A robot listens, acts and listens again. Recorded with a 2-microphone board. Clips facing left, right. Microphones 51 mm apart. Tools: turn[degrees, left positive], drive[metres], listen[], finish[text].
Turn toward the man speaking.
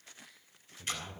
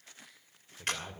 Thought: The man speaking: about 40° right or 140° right.
Action: turn[-40]
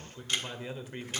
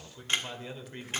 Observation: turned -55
Thought: So it is at 20° left.
Action: turn[20]
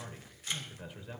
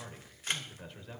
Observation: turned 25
Action: finish[Facing the man speaking.]